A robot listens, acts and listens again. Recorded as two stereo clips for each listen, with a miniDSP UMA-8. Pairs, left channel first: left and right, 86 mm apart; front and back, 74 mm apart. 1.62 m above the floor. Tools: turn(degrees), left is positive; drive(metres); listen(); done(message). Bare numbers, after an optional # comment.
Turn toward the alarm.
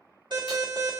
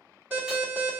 # The alarm: 115° right.
turn(-115)
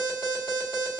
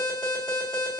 # The alarm is now 10° left.
turn(10)
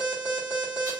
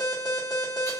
done("Facing the alarm, 2 to 4 m away.")